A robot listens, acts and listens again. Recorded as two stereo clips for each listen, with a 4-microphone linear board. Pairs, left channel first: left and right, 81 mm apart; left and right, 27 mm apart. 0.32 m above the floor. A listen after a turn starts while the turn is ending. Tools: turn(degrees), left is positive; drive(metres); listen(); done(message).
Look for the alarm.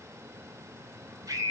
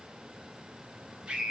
listen()
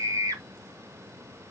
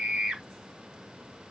listen()
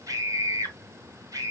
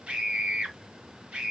done("I can't make out an alarm, only a scream.")